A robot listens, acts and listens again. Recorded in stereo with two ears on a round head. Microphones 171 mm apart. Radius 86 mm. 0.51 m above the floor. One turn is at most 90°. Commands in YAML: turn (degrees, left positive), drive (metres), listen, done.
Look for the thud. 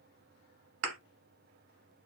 turn: -90
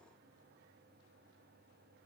done: "Facing where the thud came from. I can't hear it now."